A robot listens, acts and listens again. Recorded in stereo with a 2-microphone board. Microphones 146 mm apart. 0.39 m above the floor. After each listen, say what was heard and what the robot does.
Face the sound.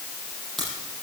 Turn 30° left.
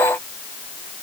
Keep listening.
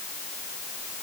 I heard a crack, but can't make it out now. It was about 30° right or 150° left.